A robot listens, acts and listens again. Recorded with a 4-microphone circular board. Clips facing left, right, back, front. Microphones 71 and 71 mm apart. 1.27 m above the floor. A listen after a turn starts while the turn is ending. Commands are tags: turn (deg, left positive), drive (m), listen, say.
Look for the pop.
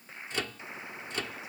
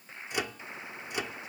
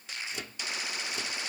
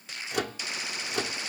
<listen/>
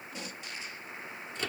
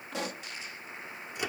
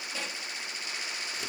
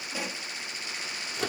<turn deg="-80"/>
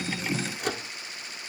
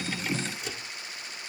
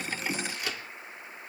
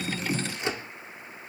<say>Facing where the pop came from. I can't hear it now.</say>